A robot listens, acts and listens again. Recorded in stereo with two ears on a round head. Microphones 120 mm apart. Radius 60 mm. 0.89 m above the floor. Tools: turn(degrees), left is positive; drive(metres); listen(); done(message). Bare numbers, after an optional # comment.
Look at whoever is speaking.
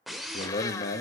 # The man speaking: about 65° left or 115° left.
turn(65)
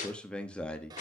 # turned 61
# So it is at 10° left.
turn(10)
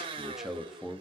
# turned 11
done("Facing the man speaking, 1 to 2 m away.")